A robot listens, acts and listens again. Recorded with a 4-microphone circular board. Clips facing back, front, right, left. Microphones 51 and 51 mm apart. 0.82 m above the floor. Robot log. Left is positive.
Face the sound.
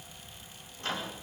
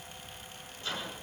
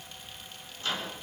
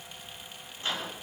note: The microwave: 155° left.
cmd yaw +155
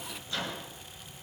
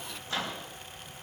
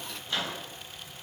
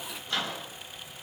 end: Found it: a microwave, straight ahead.